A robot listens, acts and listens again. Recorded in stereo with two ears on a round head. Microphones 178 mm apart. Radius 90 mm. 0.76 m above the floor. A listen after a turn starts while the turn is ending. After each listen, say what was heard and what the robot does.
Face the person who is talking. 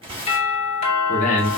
The man speaking: about 35° left or 145° left. Turn 35° left.
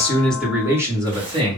So it is at 30° right. Turn 30° right.
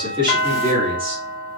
The man speaking is now 25° right. Turn 25° right.
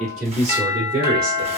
The man speaking is now 40° right. Turn 40° right.
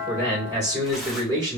The man speaking is now 20° right. Turn 20° right.
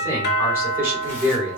The man speaking is now 10° right. Turn 10° right.
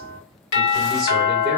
Keep listening.
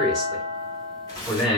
Found it: a man speaking, straight ahead, 2 to 4 m away.